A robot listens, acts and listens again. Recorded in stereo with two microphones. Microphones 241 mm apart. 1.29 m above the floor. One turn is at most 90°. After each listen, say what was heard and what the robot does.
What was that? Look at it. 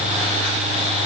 Keep listening.
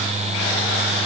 Keep listening.
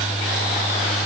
I can't make out anything.